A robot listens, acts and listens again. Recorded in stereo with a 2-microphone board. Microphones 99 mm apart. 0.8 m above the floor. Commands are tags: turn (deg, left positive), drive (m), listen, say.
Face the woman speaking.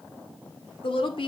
<turn deg="60"/>
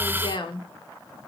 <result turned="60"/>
<turn deg="55"/>
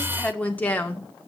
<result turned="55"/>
<turn deg="20"/>
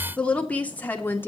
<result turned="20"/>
<turn deg="20"/>
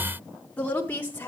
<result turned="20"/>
<turn deg="20"/>
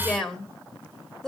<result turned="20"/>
<say>Found it: a woman speaking, straight ahead.</say>